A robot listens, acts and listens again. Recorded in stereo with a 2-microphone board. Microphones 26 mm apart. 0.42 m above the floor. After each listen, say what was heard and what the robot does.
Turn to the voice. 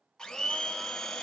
Keep listening.
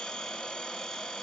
Keep listening.
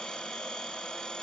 I can't make out anyone speaking to turn to.